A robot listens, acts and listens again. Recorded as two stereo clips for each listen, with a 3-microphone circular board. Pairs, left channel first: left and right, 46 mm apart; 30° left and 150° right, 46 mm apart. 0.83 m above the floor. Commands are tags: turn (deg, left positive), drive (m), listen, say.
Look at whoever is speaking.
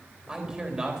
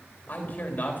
<turn deg="-20"/>
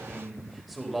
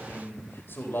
<say>Facing the man speaking.</say>